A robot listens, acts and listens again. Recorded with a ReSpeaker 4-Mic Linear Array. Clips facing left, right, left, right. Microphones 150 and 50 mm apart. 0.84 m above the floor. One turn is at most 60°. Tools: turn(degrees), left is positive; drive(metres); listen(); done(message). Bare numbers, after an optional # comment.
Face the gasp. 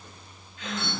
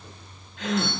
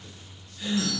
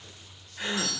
turn(-60)
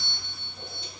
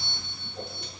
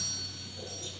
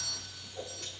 # Nothing new. It was at 30° right.
turn(-30)
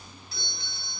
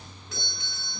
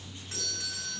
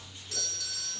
done("I heard a gasp from this way, but can't make it out now.")